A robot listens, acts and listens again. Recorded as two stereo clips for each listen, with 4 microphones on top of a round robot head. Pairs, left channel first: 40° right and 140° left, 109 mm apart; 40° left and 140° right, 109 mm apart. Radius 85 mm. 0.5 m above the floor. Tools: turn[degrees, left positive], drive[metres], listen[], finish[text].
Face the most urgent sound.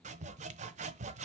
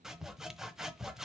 Action: listen[]
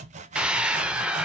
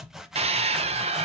Thought: The scream: 140° right.
Action: turn[-140]
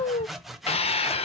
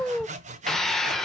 Thought: The scream is now 45° right.
Action: turn[-45]
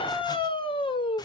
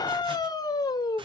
Thought: The scream is now 10° right.
Action: turn[-10]
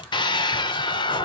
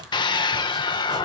Action: finish[Found it: a scream, straight ahead, 1 to 2 m away.]